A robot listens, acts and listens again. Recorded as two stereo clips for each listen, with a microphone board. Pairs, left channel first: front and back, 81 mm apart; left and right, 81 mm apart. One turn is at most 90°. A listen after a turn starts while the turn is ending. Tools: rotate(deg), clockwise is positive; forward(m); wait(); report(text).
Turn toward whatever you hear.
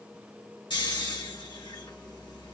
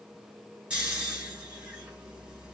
rotate(15)
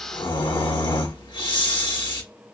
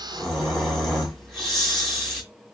report("Found it: snoring, straight ahead.")